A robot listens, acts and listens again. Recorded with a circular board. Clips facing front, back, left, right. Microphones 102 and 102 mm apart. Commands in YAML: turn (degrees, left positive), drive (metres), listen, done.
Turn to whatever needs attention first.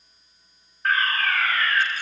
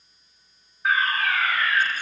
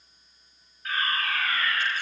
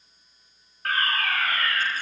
turn: -95
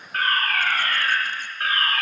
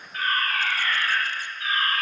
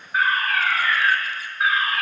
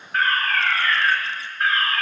turn: 10
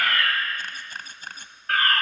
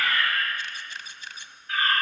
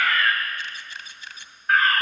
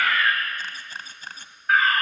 done: "Facing the fire alarm, over 4 m away."